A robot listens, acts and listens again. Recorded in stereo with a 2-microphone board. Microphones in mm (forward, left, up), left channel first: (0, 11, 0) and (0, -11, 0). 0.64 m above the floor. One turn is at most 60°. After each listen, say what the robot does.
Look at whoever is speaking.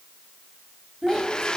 Turn 15° right.
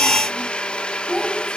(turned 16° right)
Turn 15° left.
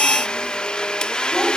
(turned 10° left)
Keep listening.
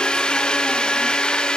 Keep listening.
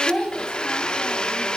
Turn 40° left.
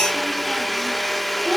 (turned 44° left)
Keep listening.
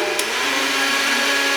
Keep listening.
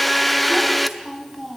Facing the child speaking.